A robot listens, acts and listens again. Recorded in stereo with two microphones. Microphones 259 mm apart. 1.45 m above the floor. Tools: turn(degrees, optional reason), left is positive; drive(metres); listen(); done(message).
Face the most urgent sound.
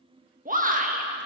turn(degrees=-30, reason="The shout: about 30° right or 150° right.")
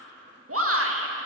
turn(degrees=-120, reason="So it is at 120° right.")
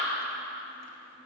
listen()
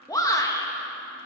turn(degrees=15, reason="The shout is now 15° left.")
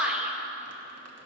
done("Facing the shout, 1 to 2 m away.")